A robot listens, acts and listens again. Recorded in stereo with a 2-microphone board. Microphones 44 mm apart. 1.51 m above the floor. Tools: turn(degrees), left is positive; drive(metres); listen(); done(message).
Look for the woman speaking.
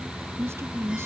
turn(degrees=-90)
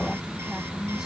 turn(degrees=-10)
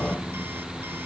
listen()
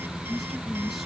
done("Found it: a woman speaking, straight ahead.")